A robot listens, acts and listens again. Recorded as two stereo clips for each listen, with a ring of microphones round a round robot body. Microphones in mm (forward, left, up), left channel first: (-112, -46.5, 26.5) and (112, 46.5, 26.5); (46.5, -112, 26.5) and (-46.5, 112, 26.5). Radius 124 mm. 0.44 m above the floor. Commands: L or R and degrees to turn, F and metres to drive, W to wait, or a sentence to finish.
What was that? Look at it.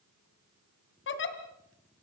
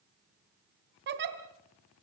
L160
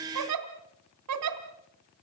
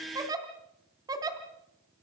L35
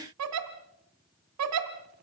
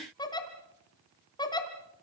Facing the giggle, 2 to 4 m away.